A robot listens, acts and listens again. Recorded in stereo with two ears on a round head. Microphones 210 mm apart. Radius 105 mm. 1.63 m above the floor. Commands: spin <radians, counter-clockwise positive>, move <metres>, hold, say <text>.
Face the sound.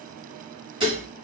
spin -0.35
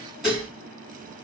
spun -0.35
say Facing the dishes clattering, 1 to 2 m away.